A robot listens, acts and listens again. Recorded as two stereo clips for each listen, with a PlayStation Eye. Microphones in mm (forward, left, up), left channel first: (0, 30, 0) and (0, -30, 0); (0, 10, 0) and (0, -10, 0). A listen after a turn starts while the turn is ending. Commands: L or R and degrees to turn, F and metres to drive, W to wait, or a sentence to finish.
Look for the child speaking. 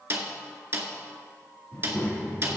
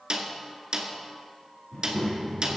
L35
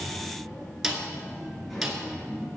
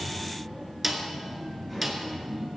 Found it: a child speaking, straight ahead.